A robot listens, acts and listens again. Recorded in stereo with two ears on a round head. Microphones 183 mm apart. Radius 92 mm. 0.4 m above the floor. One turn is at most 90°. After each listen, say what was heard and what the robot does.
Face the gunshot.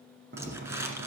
The gunshot: about 60° right or 120° right. Turn 60° right.
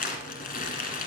Keep listening.
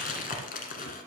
I heard a gunshot, but can't make it out now. It was about straight ahead or 60° right.